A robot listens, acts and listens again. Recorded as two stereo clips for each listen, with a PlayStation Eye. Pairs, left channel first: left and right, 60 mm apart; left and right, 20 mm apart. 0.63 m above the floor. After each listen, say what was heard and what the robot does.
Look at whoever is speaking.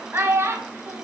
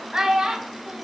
The child speaking: about 40° right or 140° right. Turn 40° right.
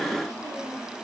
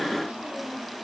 Keep listening.
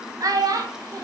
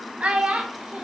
So it is at 100° right. Turn 100° right.
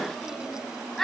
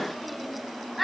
Found it: a child speaking, straight ahead, 2 to 4 m away.